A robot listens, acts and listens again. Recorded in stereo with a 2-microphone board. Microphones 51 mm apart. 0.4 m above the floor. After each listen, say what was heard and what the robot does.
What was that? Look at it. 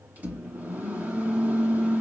The microwave: about 35° right or 145° right. Turn 35° right.
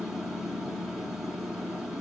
Found it: a microwave, straight ahead.